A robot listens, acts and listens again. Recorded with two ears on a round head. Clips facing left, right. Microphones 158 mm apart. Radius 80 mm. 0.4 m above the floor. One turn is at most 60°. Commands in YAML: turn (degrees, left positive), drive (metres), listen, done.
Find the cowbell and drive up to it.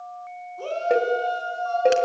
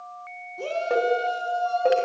turn: 20
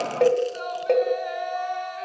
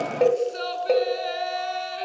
drive: 1.0
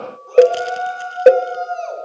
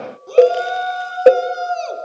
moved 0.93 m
turn: 10
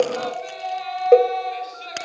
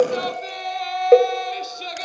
drive: 1.0
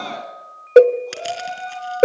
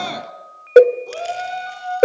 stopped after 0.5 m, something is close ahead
done: "I am next to the cowbell."